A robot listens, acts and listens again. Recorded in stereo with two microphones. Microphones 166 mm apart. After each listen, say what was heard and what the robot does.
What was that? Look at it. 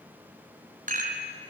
The rattle: about 55° right or 125° right. Turn 55° right.
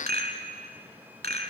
So it is at 70° right. Turn 70° right.
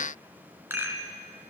The rattle is now 15° right. Turn 15° right.
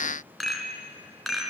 Facing the rattle.